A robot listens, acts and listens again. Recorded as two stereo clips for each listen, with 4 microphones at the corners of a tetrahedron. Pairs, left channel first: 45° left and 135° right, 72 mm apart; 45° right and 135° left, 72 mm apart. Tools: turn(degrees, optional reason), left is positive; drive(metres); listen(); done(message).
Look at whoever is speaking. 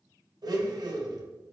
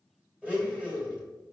listen()
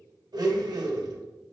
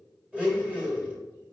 listen()
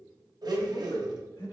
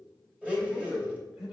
turn(degrees=50, reason="The man speaking: 50° left.")
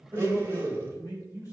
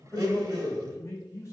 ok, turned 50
done("Found it: a man speaking, straight ahead.")